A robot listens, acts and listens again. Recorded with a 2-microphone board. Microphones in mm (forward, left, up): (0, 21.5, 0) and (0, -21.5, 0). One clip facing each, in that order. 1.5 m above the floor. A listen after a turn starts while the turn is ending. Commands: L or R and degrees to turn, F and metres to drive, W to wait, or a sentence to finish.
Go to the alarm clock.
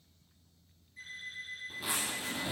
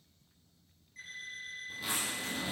R70
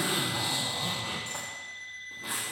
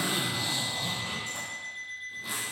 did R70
R10
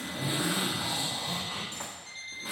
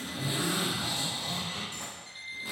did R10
F1.0
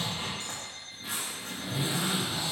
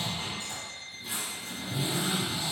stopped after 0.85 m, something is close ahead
I am next to the alarm clock.